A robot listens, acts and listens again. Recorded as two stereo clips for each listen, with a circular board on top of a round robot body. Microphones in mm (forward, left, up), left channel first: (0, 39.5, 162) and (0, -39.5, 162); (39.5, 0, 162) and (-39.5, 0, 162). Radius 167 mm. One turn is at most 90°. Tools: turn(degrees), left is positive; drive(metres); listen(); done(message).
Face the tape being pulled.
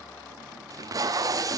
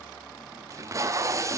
turn(degrees=-90)
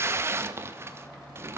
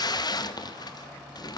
turn(degrees=-30)
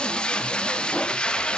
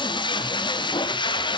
turn(degrees=15)
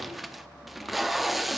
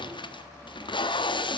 done("Found it: tape being pulled, straight ahead.")